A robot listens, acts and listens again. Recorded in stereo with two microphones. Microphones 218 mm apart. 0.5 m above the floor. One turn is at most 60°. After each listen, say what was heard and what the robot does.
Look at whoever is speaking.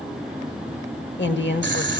The woman speaking: about 60° left or 120° left. Turn 60° left.
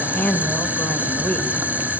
So it is at 10° left. Turn 10° left.
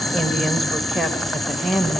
Found it: a woman speaking, straight ahead, 1 to 2 m away.